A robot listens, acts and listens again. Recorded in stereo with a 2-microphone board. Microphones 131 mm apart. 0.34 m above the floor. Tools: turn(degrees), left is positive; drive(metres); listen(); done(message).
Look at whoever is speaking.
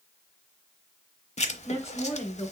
turn(degrees=20)
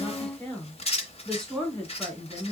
done("Facing the woman speaking.")